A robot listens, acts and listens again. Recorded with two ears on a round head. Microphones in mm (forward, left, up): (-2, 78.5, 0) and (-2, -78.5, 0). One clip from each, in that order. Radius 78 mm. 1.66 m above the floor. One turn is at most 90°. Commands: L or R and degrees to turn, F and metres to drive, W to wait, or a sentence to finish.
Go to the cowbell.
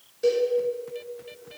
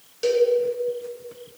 R60
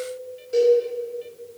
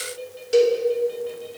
R55
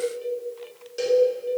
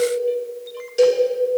F1.0
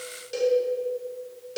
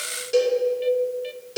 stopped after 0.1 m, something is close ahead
Something is in my way. I am facing the cowbell but have not reached it.